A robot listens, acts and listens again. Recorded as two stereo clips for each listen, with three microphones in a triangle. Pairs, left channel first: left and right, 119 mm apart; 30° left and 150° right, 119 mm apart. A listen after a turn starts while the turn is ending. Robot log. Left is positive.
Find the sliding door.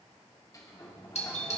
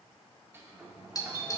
note: The sliding door: 145° left.
cmd yaw +145
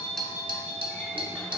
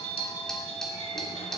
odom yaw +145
cmd idle
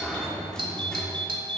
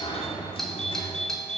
end: Found it: a sliding door, straight ahead, 2 to 4 m away.